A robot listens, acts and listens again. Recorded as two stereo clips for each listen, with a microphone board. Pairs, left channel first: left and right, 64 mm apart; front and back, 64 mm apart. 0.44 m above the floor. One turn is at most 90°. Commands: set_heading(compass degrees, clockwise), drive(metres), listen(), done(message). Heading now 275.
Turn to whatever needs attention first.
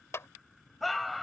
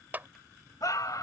done("Found it: a scream, straight ahead.")